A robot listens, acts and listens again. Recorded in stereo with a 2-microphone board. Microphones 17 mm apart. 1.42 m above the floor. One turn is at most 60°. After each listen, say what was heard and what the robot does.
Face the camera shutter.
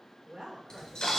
The camera shutter: about 60° left or 120° left. Turn 60° left.
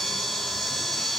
So it is at 60° left. Turn 60° left.
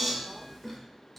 The camera shutter is now 20° left. Turn 20° left.
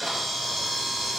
Facing the camera shutter.